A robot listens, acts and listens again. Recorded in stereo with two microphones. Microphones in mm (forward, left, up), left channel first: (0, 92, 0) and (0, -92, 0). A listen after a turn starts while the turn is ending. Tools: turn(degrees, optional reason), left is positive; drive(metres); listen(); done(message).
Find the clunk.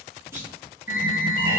turn(degrees=-30)
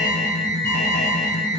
listen()
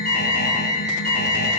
done("I heard a clunk, but can't make it out now. It was about 15° left or 135° right.")